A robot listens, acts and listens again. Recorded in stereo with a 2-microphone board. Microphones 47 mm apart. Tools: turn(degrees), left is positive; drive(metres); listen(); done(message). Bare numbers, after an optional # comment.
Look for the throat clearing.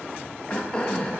# The throat clearing: about 20° left or 160° left.
turn(20)
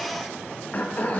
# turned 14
# So it is at 145° left.
turn(145)
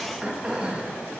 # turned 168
# The throat clearing is now 25° right.
turn(-25)
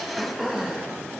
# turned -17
done("Facing the throat clearing.")